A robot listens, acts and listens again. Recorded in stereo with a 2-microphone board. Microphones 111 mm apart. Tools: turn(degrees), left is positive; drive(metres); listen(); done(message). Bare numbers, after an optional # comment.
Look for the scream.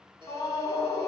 # The scream: about 35° left or 145° left.
turn(35)
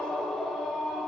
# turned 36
done("Facing the scream.")